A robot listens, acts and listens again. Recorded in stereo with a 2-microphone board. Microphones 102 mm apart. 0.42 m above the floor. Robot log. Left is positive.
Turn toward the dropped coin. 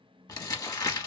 cmd idle
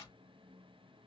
cmd idle
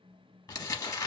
end: I can't make out a dropped coin to turn to.